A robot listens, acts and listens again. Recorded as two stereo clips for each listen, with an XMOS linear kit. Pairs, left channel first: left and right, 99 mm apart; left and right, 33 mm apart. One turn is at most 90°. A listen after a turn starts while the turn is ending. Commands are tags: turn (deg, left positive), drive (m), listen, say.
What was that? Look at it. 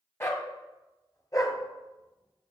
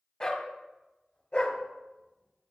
<turn deg="40"/>
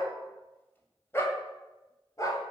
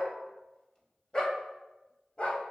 <turn deg="35"/>
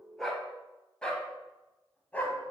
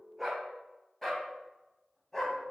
<turn deg="15"/>
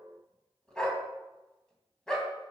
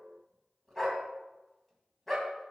<say>Facing the dog barking, 2 to 4 m away.</say>